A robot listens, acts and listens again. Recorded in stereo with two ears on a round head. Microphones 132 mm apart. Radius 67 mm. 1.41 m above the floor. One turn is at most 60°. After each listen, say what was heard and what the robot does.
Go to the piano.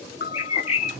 The piano: about 70° left or 110° left. Turn 60° left.
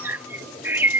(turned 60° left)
Keep listening.
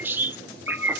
Keep listening.
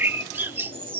I heard a piano, but can't make it out now. It was about 10° left or 50° left. I did not reach it.